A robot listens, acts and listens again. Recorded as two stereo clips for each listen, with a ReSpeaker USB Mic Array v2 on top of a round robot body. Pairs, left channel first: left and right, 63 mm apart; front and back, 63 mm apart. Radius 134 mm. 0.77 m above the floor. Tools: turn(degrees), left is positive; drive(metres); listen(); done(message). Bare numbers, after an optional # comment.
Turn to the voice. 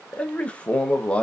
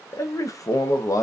# The man speaking: 20° left.
turn(20)
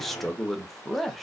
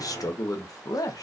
done("Found it: a man speaking, straight ahead.")